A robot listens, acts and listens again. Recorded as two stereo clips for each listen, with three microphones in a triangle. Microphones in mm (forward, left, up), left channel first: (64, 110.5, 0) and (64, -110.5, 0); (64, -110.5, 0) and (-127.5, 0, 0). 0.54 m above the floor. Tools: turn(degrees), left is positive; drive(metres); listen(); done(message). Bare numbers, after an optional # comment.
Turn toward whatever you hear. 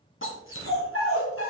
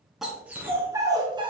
# The dog barking: 85° left.
turn(85)
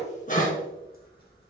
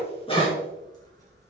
# The dog barking is now 35° left.
turn(35)
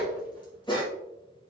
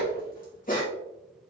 # The dog barking is now 20° left.
turn(20)
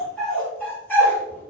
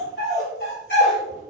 # The dog barking is now 10° left.
turn(10)
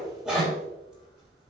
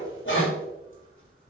done("Found it: a dog barking, straight ahead.")